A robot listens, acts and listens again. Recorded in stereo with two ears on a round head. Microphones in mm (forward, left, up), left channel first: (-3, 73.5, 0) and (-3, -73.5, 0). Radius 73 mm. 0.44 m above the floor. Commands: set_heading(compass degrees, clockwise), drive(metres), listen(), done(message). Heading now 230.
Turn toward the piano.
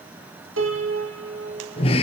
set_heading(320)
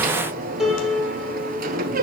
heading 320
done("Facing the piano, 2 to 4 m away.")